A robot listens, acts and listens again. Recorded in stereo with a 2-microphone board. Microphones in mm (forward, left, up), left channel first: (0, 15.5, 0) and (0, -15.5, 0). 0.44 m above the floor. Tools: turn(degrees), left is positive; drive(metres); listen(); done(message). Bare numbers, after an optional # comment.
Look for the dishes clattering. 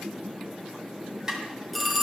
# The dishes clattering: about 25° right or 155° right.
turn(-25)
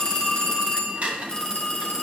# So it is at 130° right.
turn(-130)
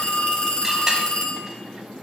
listen()
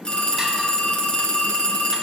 listen()
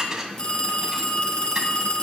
# The dishes clattering is now 15° right.
turn(-15)
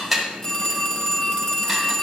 done("Facing the dishes clattering.")